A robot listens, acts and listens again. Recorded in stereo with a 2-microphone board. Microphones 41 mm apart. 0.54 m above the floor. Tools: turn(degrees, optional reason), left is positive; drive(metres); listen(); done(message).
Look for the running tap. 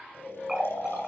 turn(degrees=-15, reason="The running tap: about 15° right or 165° right.")
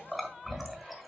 done("Facing the running tap.")